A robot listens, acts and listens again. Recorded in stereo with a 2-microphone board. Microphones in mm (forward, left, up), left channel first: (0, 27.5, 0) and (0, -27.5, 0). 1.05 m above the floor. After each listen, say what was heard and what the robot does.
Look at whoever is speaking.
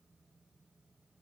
Keep listening.
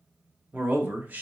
The man speaking: about 35° right or 145° right. Turn 35° right.
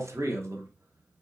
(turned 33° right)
So it is at 115° right. Turn 115° right.
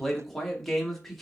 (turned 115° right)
Facing the man speaking.